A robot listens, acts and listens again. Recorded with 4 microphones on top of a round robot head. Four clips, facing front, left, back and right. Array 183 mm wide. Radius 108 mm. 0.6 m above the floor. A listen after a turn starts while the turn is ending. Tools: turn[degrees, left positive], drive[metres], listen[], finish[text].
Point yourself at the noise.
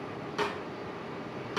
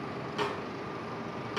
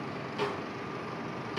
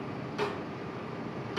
Thought: The snare drum: 40° left.
Action: turn[40]
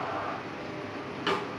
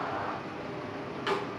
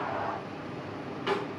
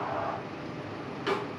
Thought: The snare drum is now 10° right.
Action: turn[-10]
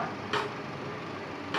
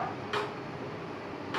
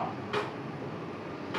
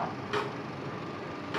Action: finish[Found it: a snare drum, straight ahead, 2 to 4 m away.]